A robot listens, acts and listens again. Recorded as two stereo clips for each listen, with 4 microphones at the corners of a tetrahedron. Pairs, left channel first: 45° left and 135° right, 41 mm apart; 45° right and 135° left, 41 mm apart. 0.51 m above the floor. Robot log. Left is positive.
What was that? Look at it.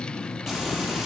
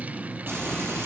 note: The frying: 150° left.
cmd yaw +150
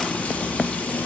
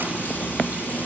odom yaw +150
end: Facing the frying.